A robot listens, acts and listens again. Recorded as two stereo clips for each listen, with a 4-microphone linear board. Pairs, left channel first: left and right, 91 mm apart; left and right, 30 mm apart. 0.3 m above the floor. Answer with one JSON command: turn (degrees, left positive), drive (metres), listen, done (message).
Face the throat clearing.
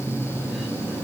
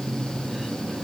{"listen": true}
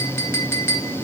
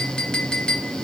{"listen": true}
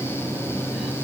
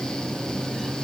{"done": "I can't make out throat clearing to turn to."}